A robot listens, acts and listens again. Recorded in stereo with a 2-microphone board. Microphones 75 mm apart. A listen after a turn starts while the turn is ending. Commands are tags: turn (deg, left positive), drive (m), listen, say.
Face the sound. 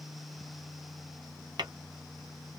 <turn deg="-90"/>
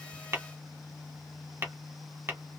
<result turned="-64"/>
<turn deg="-30"/>
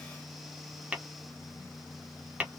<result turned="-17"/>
<turn deg="-15"/>
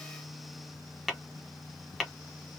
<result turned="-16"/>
<say>Facing the tapping.</say>